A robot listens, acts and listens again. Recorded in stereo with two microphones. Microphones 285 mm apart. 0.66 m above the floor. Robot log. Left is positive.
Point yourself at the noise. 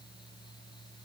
cmd idle
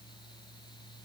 cmd idle
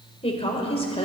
note: The woman speaking: about 20° left or 160° left.
cmd yaw +20
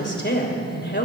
note: So it is at 140° left.
cmd yaw +140
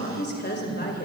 note: The woman speaking is now 35° left.
cmd yaw +35
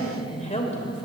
note: The woman speaking is now 25° left.
cmd yaw +25
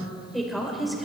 end: Facing the woman speaking, 2 to 4 m away.